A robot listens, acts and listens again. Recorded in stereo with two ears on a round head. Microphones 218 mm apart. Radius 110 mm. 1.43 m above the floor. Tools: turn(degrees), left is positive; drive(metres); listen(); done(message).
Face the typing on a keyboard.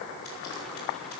listen()
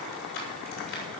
listen()
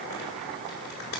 done("I can't make out typing on a keyboard, only frying.")